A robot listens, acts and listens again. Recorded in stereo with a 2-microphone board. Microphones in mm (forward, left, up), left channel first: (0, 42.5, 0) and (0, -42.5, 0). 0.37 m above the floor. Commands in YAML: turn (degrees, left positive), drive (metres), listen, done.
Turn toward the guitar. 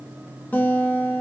turn: 20
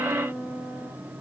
done: "Facing the guitar."